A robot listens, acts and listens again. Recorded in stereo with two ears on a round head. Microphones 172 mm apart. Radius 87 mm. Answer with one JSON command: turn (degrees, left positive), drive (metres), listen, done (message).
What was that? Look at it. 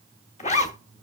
{"turn": 35}
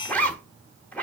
{"turn": 10}
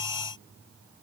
{"listen": true}
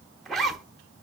{"done": "Facing the zipper, under 1 m away."}